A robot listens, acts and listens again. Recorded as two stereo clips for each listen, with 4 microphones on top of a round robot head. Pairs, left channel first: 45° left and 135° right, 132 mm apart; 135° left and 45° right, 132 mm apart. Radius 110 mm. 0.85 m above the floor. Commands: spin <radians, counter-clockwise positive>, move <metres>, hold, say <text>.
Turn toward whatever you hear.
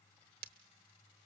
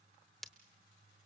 spin -2.36
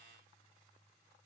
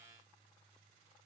say I heard breaking glass from this way, but can't make it out now.